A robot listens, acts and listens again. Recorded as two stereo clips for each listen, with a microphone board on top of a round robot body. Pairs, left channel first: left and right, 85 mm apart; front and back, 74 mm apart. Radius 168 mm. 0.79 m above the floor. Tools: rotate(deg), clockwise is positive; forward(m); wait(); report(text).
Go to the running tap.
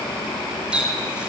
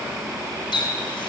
rotate(10)
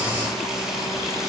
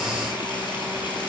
wait()
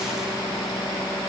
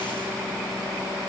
wait()
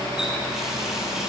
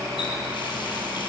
report("Facing where the running tap came from. I can't hear it now. I did not reach it.")